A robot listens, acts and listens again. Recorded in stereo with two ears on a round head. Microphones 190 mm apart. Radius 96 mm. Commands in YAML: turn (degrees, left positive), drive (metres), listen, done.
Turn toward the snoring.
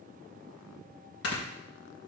turn: 65
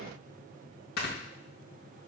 turn: 50
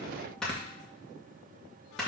done: "Found it: snoring, straight ahead, 1 to 2 m away."